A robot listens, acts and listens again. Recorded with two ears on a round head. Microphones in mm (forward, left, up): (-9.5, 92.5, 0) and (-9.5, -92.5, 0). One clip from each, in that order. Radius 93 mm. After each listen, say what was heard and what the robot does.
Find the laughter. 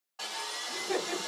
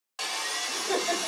The laughter: about 45° right or 135° right. Turn 45° right.
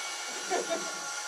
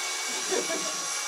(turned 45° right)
So it is at 10° right. Turn 10° right.
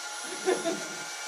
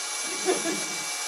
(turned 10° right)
Facing the laughter, 2 to 4 m away.